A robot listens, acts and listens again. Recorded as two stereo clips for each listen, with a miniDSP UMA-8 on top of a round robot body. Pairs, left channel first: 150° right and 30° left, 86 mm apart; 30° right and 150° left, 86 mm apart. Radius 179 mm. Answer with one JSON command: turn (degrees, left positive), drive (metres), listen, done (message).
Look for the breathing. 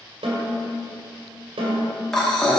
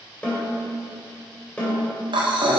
{"turn": 125}
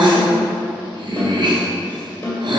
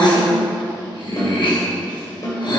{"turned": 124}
{"done": "Facing the breathing, 1 to 2 m away."}